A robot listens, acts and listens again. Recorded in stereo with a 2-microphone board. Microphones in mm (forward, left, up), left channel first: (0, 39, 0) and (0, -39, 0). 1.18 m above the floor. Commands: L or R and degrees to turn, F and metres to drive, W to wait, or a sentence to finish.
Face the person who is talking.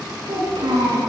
R90
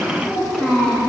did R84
R10
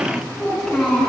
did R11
Facing the child speaking, over 4 m away.